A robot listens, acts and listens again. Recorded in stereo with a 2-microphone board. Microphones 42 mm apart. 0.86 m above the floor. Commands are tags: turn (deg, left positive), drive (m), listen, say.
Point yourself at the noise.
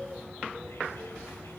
<listen/>
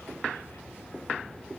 <listen/>
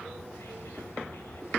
<say>I can't make out anything to turn to.</say>